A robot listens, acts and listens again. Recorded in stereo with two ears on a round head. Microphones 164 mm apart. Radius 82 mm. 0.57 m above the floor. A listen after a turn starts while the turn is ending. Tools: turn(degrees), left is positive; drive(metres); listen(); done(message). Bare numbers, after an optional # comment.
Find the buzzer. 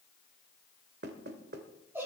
listen()
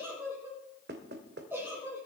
listen()
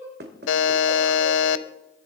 turn(90)
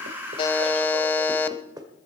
# So it is at 10° left.
turn(10)
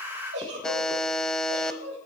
done("Found it: a buzzer, straight ahead, under 1 m away.")